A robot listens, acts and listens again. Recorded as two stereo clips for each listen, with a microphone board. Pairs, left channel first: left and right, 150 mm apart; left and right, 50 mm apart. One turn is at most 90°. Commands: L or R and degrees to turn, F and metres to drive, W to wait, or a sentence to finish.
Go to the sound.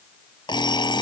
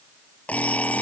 L30
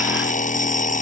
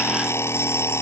L90
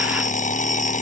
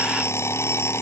L55
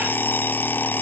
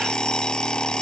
L15
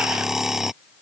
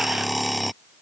F1.0
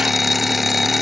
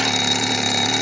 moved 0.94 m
F1.0
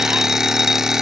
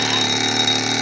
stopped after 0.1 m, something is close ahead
Something is in my way. I am facing the alarm clock but have not reached it.